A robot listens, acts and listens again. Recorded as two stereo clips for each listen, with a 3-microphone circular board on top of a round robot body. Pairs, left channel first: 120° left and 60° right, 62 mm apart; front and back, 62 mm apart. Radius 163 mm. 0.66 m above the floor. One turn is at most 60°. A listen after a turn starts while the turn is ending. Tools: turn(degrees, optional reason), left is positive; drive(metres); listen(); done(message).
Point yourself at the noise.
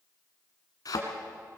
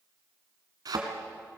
turn(degrees=60, reason="The thud: 155° left.")
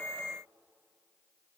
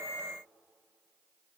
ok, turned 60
turn(degrees=60, reason="Nothing new. It was at 95° left.")
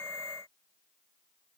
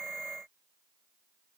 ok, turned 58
turn(degrees=35, reason="Nothing new. It was at 35° left.")
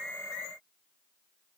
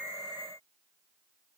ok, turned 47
turn(degrees=-10, reason="Nothing new. It was at 10° right.")
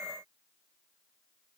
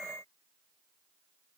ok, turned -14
done("Facing where the thud came from. I can't hear it now.")